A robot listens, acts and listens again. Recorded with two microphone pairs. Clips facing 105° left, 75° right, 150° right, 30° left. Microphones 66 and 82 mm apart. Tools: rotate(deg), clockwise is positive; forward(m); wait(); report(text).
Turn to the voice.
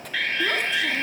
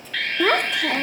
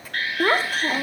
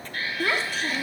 rotate(105)
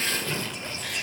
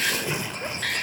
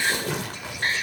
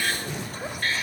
wait()
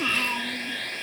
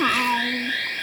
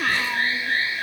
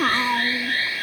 rotate(20)
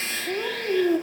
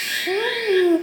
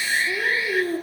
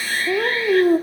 report("Facing the child speaking, under 1 m away.")